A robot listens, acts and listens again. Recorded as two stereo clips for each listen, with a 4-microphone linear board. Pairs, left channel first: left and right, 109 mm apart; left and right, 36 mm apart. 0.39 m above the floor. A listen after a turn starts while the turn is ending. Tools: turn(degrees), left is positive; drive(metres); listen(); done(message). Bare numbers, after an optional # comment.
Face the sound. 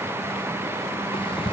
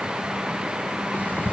# The ticking: about 55° left or 125° left.
turn(55)
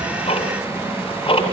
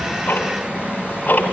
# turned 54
# So it is at 60° left.
turn(60)
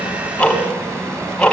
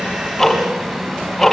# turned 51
# The ticking is now 10° left.
turn(10)
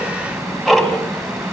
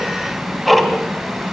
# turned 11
done("Facing the ticking, 2 to 4 m away.")